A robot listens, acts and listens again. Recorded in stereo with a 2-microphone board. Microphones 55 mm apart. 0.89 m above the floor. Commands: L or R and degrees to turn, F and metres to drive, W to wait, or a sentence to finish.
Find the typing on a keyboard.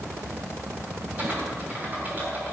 R35
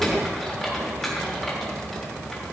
Found it: typing on a keyboard, straight ahead, 2 to 4 m away.